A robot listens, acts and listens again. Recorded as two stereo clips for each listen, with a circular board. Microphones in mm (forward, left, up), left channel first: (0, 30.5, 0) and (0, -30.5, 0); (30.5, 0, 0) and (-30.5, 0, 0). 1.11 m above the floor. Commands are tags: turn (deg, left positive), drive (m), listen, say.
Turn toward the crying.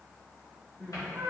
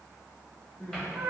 <turn deg="10"/>
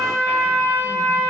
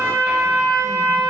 <listen/>
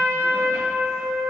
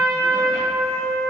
<listen/>
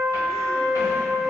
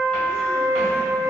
<say>I heard crying from this way, but can't make it out now.</say>